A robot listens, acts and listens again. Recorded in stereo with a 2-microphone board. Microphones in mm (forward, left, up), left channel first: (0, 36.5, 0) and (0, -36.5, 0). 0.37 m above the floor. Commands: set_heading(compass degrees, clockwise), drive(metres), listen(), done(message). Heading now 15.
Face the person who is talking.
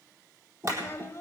set_heading(340)
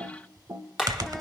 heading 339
listen()
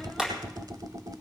listen()
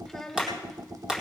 done("Facing the child speaking.")